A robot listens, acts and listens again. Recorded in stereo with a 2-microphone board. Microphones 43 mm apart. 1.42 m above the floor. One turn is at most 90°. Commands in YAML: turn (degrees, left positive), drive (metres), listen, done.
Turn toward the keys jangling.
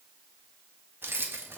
turn: -65
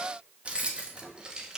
turn: -20
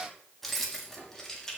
turn: 10
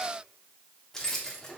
turn: 10
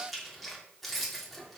done: "Found it: keys jangling, straight ahead, 2 to 4 m away."